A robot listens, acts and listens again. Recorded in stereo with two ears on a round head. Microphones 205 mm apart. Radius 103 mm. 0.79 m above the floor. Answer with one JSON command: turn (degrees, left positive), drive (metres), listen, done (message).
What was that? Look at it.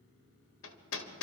{"turn": 60}
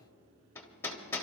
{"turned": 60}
{"turn": 10}
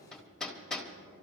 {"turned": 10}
{"done": "Found it: hammering, straight ahead."}